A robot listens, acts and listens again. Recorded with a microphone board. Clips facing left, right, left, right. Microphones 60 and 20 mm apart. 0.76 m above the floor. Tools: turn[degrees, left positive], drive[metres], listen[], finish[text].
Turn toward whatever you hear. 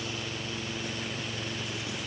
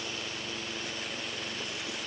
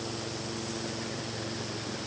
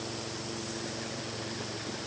Action: listen[]
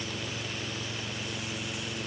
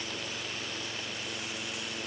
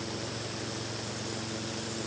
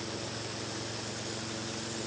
Action: listen[]
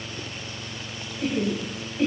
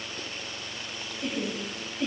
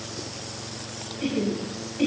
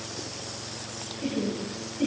Thought: The laughter: about 70° left or 110° left.
Action: turn[70]
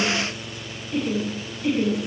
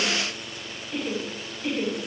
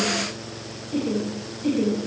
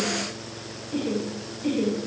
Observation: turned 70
Action: finish[Found it: laughter, straight ahead, over 4 m away.]